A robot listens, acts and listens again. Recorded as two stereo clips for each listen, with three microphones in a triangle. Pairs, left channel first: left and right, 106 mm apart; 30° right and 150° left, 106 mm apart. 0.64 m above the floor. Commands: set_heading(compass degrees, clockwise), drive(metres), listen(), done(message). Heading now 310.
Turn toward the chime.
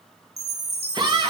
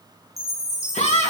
set_heading(45)
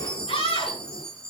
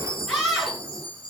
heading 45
done("Found it: a chime, straight ahead.")